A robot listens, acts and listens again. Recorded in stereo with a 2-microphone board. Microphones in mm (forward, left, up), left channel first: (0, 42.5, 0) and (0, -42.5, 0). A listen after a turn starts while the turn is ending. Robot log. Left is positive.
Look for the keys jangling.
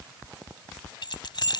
note: The keys jangling: about 65° left or 115° left.
cmd yaw +65
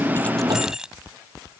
note: So it is at 10° right.
cmd yaw -10
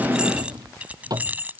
note: The keys jangling is now 20° right.
cmd yaw -20
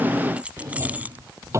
note: The keys jangling is now 20° right.
cmd yaw -20
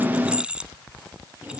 note: The keys jangling is now 15° right.
cmd yaw -15
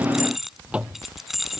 end: Facing the keys jangling.